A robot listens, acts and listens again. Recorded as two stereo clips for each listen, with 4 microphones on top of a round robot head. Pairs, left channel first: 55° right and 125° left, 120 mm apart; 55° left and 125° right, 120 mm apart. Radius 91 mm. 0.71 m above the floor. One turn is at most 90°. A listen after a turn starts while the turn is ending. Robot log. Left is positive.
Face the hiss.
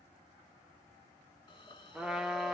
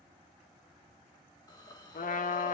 end: Found it: a hiss, straight ahead, 1 to 2 m away.